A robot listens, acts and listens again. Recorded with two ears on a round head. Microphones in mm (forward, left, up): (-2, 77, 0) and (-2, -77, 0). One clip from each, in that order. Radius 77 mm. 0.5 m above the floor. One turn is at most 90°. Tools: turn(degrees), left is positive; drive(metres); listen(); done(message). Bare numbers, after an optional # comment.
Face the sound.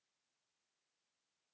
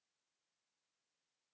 listen()
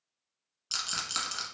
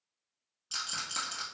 # The rattle: about 30° left or 150° left.
turn(30)
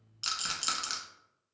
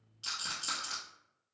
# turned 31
# So it is at 120° left.
turn(90)
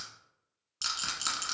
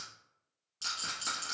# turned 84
# The rattle is now 35° left.
turn(35)
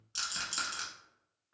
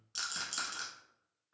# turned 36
done("Found it: a rattle, straight ahead, under 1 m away.")